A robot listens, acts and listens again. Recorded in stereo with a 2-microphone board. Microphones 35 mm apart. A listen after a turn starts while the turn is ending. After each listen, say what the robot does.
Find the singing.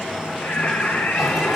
Turn 55° left.
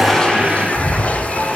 Keep listening.
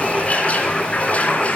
Turn 15° left.
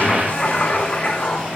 Turn 25° left.
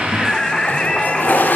Turn 25° left.
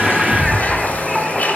Keep listening.
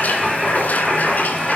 Found it: singing, straight ahead.